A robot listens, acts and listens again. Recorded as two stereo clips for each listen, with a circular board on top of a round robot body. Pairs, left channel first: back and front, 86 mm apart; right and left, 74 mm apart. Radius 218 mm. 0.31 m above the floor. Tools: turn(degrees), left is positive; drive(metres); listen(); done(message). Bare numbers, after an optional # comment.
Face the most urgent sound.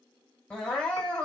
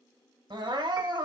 # The crying: 100° left.
turn(100)
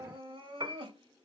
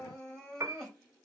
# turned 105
done("Found it: crying, straight ahead.")